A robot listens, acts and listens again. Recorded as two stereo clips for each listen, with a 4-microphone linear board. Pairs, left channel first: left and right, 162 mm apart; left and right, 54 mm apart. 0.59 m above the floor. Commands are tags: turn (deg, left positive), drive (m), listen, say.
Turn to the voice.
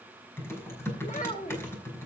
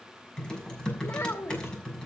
<turn deg="50"/>
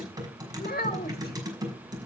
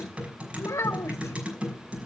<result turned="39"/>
<turn deg="85"/>
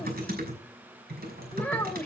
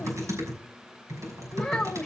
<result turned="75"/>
<turn deg="10"/>
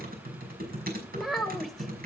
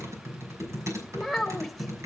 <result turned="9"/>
<say>Found it: a child speaking, straight ahead.</say>